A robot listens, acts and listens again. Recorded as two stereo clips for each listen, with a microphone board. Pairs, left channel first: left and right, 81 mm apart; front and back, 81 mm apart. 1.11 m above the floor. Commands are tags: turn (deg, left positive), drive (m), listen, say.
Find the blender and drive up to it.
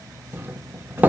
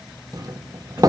<listen/>
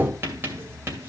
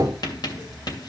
<listen/>
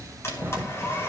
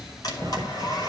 <turn deg="35"/>
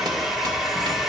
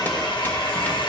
<drive m="1.0"/>
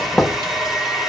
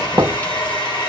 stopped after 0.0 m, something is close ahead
<say>Something is in my way. I am facing the blender but have not reached it.</say>